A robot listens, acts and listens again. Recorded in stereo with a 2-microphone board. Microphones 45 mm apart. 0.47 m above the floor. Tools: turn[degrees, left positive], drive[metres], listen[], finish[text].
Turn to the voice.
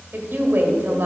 Thought: The woman speaking: about 50° right or 130° right.
Action: turn[-50]
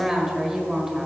Thought: So it is at 10° right.
Action: turn[-10]
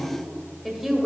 Action: finish[Found it: a woman speaking, straight ahead.]